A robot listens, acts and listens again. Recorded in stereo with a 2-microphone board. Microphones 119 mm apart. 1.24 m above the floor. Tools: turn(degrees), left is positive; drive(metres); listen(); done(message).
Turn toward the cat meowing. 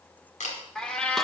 turn(degrees=30)
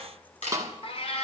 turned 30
turn(degrees=125)
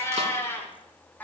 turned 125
turn(degrees=15)
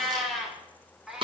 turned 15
done("Found it: a cat meowing, straight ahead.")